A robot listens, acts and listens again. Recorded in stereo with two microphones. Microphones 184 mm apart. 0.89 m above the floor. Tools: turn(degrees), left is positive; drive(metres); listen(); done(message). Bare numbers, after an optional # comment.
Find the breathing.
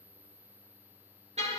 listen()
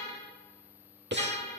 # The breathing: about 70° right or 110° right.
turn(-70)
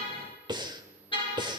# So it is at 25° right.
turn(-25)
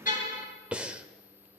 done("Facing the breathing, 1 to 2 m away.")